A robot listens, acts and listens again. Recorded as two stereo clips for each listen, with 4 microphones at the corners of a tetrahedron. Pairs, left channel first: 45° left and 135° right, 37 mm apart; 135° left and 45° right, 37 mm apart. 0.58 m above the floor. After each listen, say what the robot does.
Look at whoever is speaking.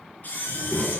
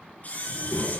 Turn 135° left.
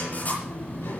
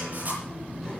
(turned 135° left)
Turn 50° left.
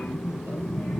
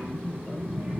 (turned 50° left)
Found it: a child speaking, straight ahead.